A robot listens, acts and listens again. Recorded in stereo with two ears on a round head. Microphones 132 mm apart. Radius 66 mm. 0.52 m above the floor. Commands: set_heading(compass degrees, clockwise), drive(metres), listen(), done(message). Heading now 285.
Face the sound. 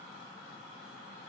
listen()
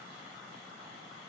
listen()
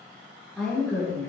set_heading(255)
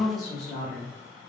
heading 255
set_heading(225)
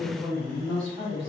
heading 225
set_heading(235)
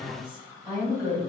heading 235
done("Found it: a woman speaking, straight ahead, 2 to 4 m away.")